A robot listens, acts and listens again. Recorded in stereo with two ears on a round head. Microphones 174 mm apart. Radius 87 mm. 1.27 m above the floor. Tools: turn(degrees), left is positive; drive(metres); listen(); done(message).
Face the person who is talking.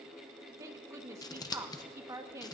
turn(degrees=-15)
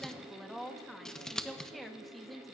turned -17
done("Found it: a woman speaking, straight ahead, 1 to 2 m away.")